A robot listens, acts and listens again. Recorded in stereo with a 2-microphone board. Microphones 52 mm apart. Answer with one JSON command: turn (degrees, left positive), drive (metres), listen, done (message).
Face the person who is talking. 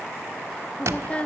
{"turn": 25}
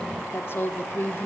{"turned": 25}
{"turn": 130}
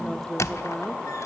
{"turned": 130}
{"done": "Found it: a woman speaking, straight ahead, 1 to 2 m away."}